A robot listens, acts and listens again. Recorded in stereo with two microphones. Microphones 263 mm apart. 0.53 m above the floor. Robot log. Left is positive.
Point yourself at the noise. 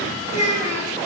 cmd yaw +90
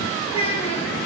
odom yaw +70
note: So it is at 25° left.
cmd yaw +25
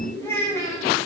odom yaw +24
note: The child speaking is now 15° left.
cmd yaw +15
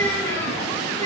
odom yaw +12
cmd idle
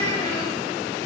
cmd idle
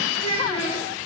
note: The child speaking is now 25° left.
cmd yaw +25
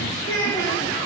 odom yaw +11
note: The child speaking is now 15° left.
cmd yaw +15
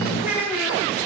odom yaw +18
end: Found it: a child speaking, straight ahead.